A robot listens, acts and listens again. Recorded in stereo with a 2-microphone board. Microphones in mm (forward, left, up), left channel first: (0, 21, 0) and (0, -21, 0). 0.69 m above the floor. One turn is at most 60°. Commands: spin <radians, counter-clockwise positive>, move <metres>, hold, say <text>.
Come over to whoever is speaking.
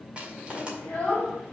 spin 0.44
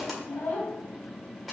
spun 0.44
spin 1.05
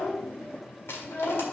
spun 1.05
spin 0.79
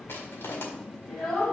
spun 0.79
spin 0.17
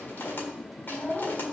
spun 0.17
move 1.0
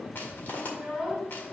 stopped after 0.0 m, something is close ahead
say Something is in my way. I am facing the child speaking but have not reached it.